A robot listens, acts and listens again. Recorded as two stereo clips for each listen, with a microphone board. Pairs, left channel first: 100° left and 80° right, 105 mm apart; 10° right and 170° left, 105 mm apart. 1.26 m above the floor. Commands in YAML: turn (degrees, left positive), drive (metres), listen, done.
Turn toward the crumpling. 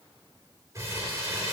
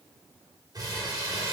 turn: -140
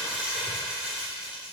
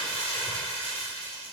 done: "Facing the crumpling, 2 to 4 m away."